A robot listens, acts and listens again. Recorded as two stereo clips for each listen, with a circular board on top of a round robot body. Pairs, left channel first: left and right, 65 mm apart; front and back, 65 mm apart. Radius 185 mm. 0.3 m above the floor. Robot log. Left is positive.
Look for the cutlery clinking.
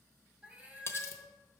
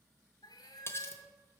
note: The cutlery clinking: 45° left.
cmd yaw +45
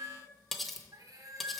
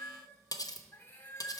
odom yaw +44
end: Found it: cutlery clinking, straight ahead, under 1 m away.